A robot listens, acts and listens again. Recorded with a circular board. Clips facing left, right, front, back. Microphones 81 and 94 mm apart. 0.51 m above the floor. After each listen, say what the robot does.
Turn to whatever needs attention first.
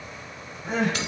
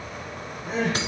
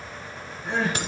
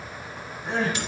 Turn 105° left.
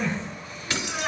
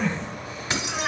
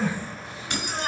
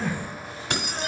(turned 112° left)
Found it: crying, straight ahead.